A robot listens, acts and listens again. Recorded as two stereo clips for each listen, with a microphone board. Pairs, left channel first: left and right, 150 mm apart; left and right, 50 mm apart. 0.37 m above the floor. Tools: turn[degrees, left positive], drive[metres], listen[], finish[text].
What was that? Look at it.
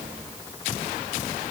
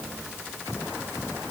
Action: listen[]
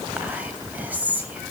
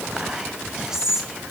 Action: turn[-30]
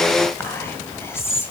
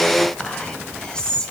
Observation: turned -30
Thought: So it is at 20° left.
Action: turn[20]
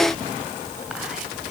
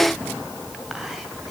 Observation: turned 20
Action: listen[]
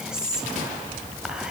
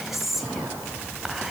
Action: finish[Found it: whispering, straight ahead.]